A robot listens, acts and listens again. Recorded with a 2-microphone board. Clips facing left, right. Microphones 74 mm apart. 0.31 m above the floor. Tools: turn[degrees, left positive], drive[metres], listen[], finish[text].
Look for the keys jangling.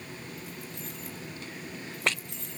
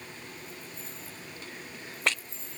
Action: turn[90]
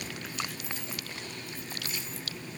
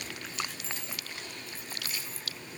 Thought: So it is at 20° left.
Action: turn[20]
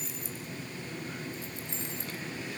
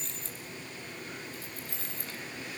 Thought: The keys jangling is now 20° left.
Action: turn[20]
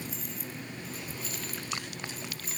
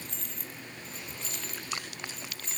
Action: finish[Found it: keys jangling, straight ahead, 2 to 4 m away.]